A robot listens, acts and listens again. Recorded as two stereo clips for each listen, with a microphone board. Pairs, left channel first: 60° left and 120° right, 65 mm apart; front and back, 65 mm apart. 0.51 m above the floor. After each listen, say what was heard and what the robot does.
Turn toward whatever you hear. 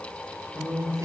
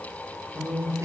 The man speaking: 155° right. Turn 155° right.
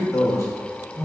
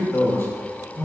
The man speaking is now 50° left. Turn 50° left.
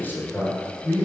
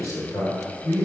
The man speaking is now 20° left. Turn 20° left.
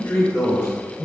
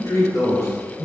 The man speaking is now 20° left. Turn 20° left.
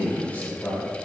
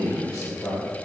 Facing the man speaking, 1 to 2 m away.